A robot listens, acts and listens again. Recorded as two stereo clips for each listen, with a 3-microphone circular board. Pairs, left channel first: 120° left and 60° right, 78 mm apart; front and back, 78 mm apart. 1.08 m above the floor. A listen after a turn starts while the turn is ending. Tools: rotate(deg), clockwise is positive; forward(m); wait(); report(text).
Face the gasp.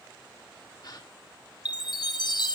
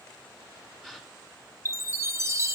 rotate(-95)
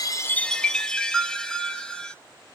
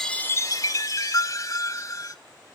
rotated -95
report("I heard a gasp from this way, but can't make it out now.")